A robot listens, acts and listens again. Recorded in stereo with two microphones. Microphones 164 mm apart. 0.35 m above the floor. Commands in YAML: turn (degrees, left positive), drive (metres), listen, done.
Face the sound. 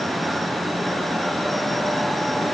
listen: true
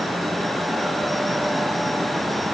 listen: true
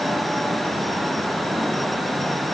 done: "I can't make out anything to turn to."